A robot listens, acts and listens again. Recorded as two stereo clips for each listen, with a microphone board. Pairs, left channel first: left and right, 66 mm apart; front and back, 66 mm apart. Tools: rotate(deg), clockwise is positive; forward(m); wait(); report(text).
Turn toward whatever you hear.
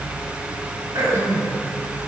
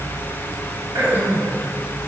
rotate(120)
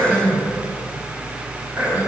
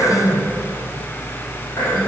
rotate(25)
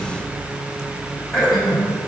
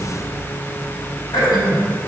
rotate(-10)
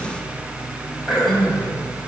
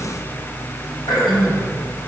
report("Facing the throat clearing.")